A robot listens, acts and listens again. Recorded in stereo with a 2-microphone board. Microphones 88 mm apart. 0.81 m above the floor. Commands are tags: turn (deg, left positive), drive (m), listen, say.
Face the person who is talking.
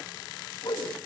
<listen/>
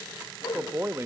<turn deg="-30"/>
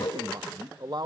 <turn deg="-115"/>
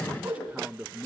<turn deg="-15"/>
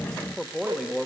<say>Found it: a man speaking, straight ahead.</say>